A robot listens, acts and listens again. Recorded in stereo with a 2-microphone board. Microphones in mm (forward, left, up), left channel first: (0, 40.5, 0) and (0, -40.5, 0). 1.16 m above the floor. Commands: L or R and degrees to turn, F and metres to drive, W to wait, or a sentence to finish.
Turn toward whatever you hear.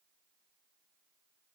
W
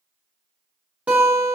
R15
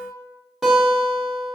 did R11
Found it: a guitar, straight ahead.